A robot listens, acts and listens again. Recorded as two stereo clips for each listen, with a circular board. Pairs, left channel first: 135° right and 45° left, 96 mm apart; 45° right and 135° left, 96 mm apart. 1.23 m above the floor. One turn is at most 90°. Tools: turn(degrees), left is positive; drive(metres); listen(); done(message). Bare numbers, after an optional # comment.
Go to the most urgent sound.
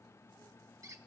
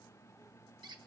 listen()
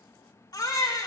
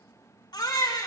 # The baby crying: 90° right.
turn(-90)
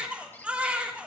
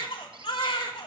# The baby crying is now 30° right.
turn(-30)
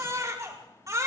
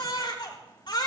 # The baby crying is now 10° right.
turn(-10)
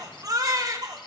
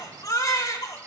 drive(1.0)
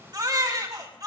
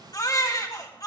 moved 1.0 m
drive(1.0)
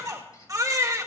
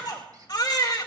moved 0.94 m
drive(1.0)
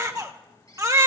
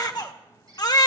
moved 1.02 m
drive(1.0)
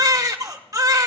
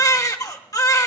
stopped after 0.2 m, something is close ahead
done("I am next to the baby crying.")